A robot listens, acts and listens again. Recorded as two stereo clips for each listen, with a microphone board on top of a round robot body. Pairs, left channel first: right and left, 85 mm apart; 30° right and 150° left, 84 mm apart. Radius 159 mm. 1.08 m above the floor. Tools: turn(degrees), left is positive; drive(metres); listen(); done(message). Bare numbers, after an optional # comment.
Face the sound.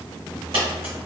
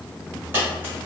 # The dropped coin: 80° left.
turn(80)
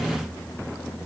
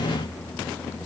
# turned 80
done("Facing where the dropped coin came from. I can't hear it now.")